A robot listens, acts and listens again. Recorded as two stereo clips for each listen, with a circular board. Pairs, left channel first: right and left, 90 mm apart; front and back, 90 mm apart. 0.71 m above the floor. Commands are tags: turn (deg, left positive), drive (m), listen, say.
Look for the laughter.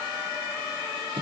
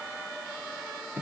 <listen/>
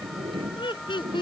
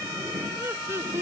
<turn deg="-120"/>
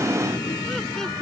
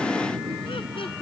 <listen/>
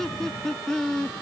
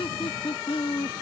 <say>Found it: laughter, straight ahead.</say>